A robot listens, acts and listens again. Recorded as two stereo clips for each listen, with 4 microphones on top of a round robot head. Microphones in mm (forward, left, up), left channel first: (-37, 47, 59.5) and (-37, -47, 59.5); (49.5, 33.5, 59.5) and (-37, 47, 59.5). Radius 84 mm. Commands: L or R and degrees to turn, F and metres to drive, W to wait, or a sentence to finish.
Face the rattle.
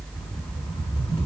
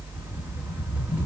L100
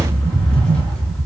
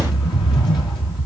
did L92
L10
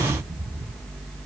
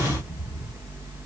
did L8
Facing the rattle.